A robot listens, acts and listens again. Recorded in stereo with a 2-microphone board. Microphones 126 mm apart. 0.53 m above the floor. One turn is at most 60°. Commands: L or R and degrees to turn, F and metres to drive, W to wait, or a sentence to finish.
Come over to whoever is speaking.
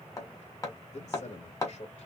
L60
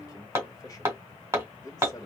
L35
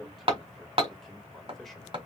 F1.0
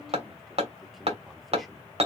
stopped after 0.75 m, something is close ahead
W
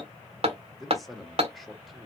Arrived at the man speaking, straight ahead.